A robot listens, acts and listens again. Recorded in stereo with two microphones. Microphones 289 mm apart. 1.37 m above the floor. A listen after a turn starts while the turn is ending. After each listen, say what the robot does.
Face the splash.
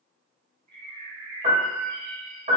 Keep listening.
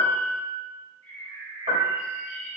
Keep listening.
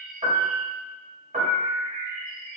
I can't make out a splash to turn to.